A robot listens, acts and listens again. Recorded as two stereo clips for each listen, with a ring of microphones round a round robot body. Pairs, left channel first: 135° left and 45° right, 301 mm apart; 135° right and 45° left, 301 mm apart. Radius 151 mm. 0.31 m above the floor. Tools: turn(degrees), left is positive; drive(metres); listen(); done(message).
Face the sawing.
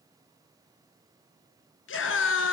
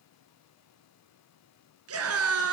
listen()
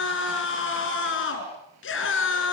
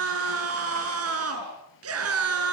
listen()
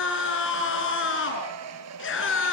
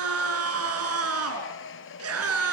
turn(degrees=-85)
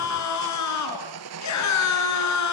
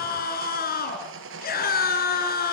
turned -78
done("Found it: sawing, straight ahead, 1 to 2 m away.")